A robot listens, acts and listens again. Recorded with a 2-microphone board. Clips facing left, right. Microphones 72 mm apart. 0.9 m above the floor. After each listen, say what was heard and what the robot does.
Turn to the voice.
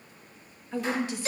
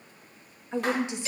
The woman speaking: about 20° right or 160° right. Turn 20° right.
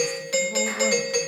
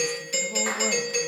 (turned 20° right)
Keep listening.
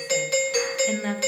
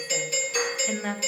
Facing the woman speaking.